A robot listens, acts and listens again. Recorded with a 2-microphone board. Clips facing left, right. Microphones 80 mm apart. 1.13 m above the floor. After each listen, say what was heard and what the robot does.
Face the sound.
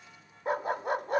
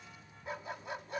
The dog barking: about 55° left or 125° left. Turn 55° left.
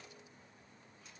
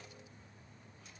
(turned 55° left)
Keep listening.
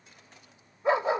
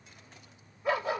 So it is at 30° left. Turn 30° left.
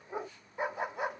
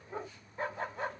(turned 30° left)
The dog barking is now 15° left. Turn 15° left.
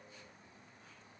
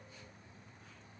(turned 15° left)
Keep listening.
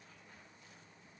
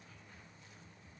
Keep listening.
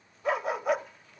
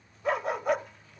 Found it: a dog barking, straight ahead.